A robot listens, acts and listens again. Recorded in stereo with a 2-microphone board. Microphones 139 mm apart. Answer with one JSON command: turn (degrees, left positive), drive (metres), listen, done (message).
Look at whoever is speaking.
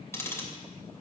{"listen": true}
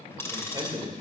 {"turn": -30}
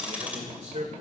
{"turn": -115}
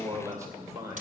{"turn": -25}
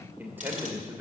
{"turn": -15}
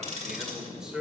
{"done": "Found it: a man speaking, straight ahead, 2 to 4 m away."}